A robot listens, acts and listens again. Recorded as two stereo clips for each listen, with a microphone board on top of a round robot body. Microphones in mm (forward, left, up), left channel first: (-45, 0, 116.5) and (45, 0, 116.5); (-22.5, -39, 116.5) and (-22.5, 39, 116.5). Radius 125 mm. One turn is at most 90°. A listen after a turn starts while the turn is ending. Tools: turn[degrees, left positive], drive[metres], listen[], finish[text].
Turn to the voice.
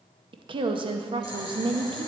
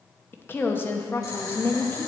Thought: The woman speaking: 25° right.
Action: turn[-25]
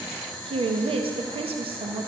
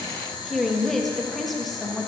Action: finish[Facing the woman speaking.]